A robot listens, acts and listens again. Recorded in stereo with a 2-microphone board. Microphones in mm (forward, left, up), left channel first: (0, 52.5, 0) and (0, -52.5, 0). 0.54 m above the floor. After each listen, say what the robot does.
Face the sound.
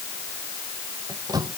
Turn 35° right.
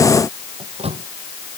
Turn 110° right.
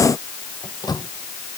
Turn 40° left.
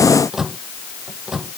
Facing the microwave.